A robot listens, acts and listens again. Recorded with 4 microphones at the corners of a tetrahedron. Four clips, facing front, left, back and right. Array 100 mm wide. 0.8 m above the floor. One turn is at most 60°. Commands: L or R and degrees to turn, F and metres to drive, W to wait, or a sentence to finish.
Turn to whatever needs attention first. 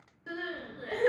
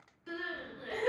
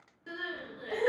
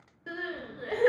R60
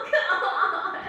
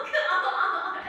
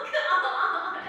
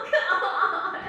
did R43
R50
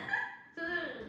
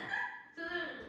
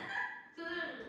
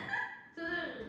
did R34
R15
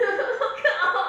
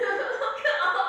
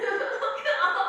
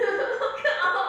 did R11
Facing the crying, under 1 m away.